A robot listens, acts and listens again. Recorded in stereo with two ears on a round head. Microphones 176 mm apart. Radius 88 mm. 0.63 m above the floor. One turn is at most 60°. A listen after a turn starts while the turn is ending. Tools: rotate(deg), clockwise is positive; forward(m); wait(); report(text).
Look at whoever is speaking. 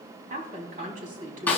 rotate(40)
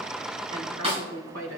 rotate(60)
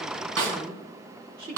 rotate(55)
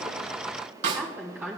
rotate(10)
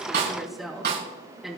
report("Found it: a woman speaking, straight ahead.")